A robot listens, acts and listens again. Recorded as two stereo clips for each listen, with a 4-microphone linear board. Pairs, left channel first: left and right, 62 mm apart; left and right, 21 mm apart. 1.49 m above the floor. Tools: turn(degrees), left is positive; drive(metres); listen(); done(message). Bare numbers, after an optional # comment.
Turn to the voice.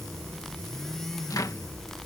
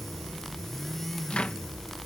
listen()
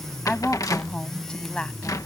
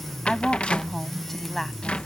# The woman speaking: about 15° left or 165° left.
turn(15)
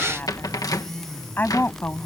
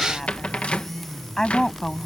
# So it is at 145° left.
turn(145)
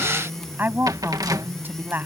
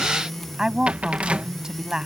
# The woman speaking is now 35° right.
turn(-35)
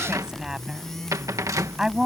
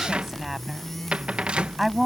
# The woman speaking is now 10° right.
turn(-10)
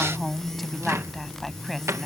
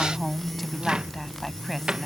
done("Found it: a woman speaking, straight ahead.")